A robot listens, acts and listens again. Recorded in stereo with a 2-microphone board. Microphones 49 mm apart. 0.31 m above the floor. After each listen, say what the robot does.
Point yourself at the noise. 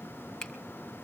Turn 30° left.
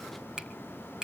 Turn 15° right.
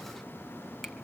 Keep listening.
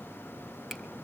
Keep listening.
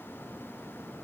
Facing where the finger snap came from. I can't hear it now.